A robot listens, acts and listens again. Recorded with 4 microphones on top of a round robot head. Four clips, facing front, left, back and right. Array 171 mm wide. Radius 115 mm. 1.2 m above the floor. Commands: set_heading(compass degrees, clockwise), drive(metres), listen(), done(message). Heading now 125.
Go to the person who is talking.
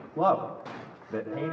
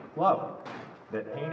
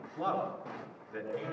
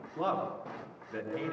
set_heading(95)
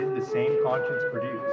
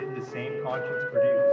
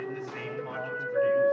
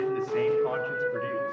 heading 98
drive(1.0)
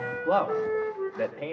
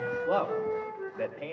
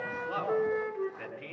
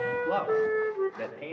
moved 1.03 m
drive(1.0)
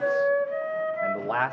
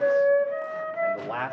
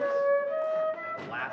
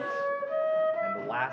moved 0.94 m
drive(1.0)
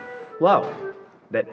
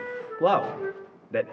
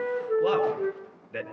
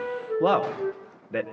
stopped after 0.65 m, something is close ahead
done("Arrived at the man speaking, straight ahead.")